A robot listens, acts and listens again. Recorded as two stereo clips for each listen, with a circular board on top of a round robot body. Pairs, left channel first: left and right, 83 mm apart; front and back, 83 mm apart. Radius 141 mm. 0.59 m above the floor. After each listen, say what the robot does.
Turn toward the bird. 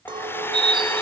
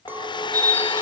Turn 65° right.
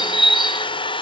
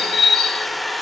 Found it: a bird, straight ahead.